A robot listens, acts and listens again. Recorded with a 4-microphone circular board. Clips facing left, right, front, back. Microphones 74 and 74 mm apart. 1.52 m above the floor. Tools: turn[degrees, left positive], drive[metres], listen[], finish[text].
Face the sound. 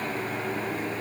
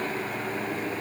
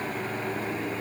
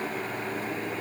Action: listen[]
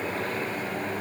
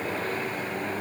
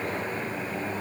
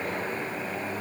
Action: listen[]
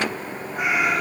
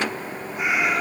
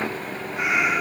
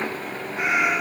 Thought: The cat meowing: 125° left.
Action: turn[125]
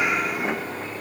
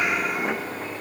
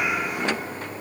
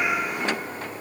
Action: listen[]
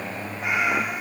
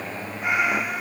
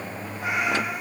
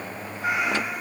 Action: finish[Facing the cat meowing.]